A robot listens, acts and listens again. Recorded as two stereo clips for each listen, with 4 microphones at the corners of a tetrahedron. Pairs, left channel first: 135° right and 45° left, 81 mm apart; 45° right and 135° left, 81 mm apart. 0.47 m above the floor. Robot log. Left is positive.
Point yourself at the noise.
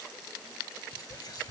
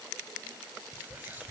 note: The whispering: 160° right.
cmd yaw -160
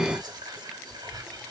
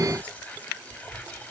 note: The whispering is now 25° left.
cmd yaw +25
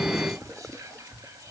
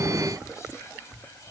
end: Found it: whispering, straight ahead, 1 to 2 m away.